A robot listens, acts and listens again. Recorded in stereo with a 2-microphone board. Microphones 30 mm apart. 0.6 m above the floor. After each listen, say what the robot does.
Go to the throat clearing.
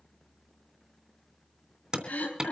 Turn 70° left.
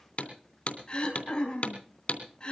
Turn 35° left.
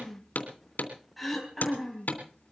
Drive 1.0 m forward.
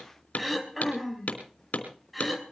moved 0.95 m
Drive 1.0 m forward.
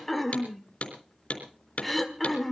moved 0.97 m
Drive 1.0 m forward.
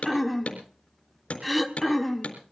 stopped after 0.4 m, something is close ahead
Arrived at the throat clearing, straight ahead.